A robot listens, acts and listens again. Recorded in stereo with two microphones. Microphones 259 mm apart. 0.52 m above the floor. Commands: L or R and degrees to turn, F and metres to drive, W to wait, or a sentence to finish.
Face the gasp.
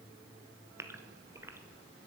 R30
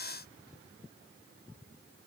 W
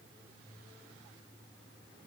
I heard a gasp, but can't make it out now. It was about 20° left or 140° right.